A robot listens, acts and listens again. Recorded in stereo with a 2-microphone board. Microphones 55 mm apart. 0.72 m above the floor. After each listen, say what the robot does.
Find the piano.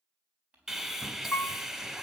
Turn 35° left.
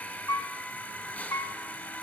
Turn 110° left.
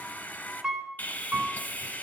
Turn 10° right.
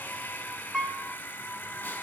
Facing the piano.